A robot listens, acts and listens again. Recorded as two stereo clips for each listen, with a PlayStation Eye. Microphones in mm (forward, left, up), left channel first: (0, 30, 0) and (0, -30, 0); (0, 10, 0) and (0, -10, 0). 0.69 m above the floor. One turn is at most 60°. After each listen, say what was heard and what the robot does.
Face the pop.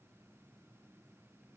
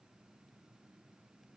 Keep listening.
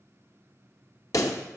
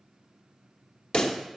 The pop: about 70° left or 110° left. Turn 60° left.
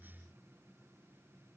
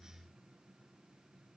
Keep listening.
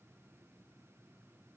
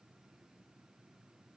I heard a pop, but can't make it out now. It was about 10° left or 50° left.